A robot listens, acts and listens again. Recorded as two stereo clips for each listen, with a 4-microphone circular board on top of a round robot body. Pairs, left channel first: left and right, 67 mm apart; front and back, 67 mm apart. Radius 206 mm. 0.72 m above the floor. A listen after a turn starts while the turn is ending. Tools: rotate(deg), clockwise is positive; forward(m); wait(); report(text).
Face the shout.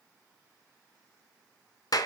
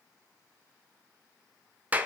wait()
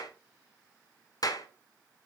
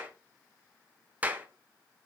wait()
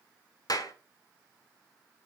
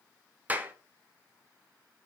report("I can't make out a shout, only a clap.")